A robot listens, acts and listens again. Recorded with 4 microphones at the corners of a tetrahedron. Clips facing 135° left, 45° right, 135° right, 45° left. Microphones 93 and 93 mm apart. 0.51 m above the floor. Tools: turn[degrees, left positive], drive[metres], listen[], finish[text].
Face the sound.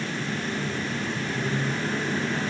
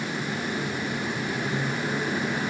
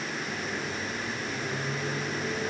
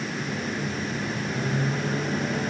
Thought: The microwave: 40° left.
Action: turn[40]
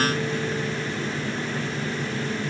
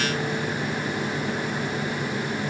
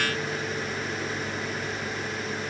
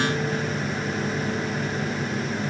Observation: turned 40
Action: listen[]
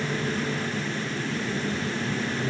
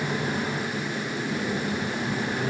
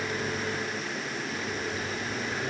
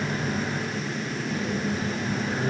Thought: The microwave is now 10° right.
Action: turn[-10]
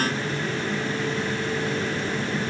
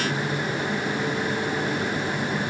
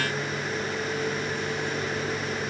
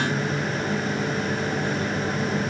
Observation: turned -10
Action: finish[Found it: a microwave, straight ahead.]